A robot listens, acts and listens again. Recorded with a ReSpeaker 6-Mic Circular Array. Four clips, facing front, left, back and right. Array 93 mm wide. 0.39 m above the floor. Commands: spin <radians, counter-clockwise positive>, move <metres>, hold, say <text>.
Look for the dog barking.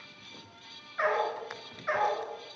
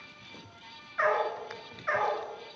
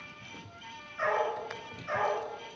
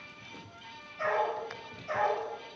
spin 1.05
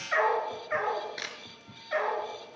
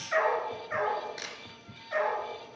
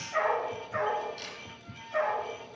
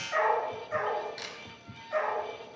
spin 0.26
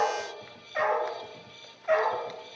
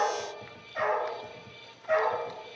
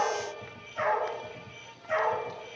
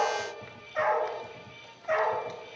spin -0.17
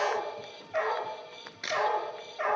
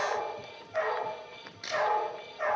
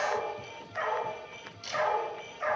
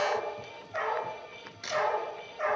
say Facing the dog barking.